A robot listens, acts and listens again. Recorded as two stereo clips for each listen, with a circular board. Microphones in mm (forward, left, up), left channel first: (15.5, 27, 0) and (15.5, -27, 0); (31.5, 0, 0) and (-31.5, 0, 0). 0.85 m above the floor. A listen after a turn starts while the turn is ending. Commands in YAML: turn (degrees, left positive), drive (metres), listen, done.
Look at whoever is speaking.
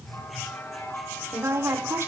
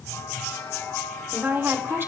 turn: -130
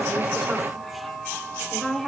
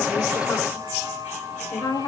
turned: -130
done: "Facing the woman speaking."